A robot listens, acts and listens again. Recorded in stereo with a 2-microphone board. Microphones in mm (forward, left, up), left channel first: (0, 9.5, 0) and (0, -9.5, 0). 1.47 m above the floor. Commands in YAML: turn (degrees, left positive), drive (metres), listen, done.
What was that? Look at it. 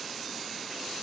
listen: true
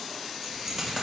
turn: -30
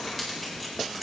done: "Facing the keys jangling, over 4 m away."